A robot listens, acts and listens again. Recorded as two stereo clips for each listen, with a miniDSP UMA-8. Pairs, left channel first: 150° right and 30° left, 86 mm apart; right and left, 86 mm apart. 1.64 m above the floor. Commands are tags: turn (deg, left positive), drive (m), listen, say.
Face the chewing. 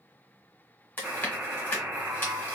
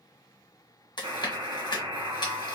<turn deg="-85"/>
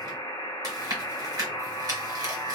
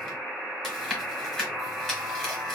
<say>Facing the chewing.</say>